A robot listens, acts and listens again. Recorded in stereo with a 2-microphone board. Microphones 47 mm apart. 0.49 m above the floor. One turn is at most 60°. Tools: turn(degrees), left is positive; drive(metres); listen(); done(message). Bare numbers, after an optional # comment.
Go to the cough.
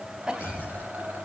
turn(-30)
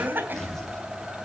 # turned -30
# So it is at 135° right.
turn(-60)
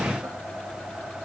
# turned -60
# Nothing new. It was at 75° right.
turn(-60)
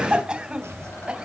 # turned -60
# The cough is now 25° right.
turn(-25)
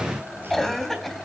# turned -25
drive(1.0)
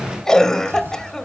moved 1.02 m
# The cough is now 10° left.
turn(10)
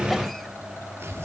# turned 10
drive(1.0)
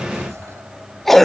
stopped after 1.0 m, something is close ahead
done("Arrived at the cough, straight ahead.")